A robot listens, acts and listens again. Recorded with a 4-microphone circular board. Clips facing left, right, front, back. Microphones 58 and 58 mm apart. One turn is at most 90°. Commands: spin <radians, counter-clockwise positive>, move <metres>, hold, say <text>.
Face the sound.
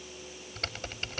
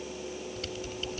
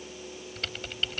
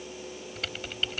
spin 1.57
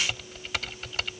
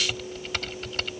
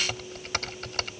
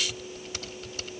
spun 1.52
say Found it: typing on a keyboard, straight ahead.